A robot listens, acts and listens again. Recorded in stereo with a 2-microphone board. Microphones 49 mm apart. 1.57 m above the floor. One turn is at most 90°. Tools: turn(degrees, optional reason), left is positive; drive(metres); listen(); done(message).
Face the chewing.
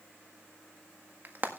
listen()
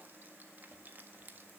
listen()
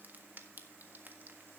done("I can't make out chewing, only frying.")